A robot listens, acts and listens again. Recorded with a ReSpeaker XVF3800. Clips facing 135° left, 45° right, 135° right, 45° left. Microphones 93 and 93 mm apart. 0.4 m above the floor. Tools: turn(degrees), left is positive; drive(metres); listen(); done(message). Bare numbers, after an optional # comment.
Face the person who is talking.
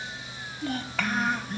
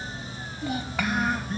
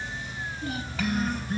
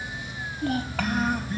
# The child speaking: 30° left.
turn(30)
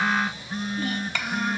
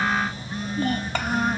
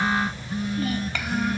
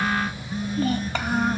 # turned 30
done("Found it: a child speaking, straight ahead.")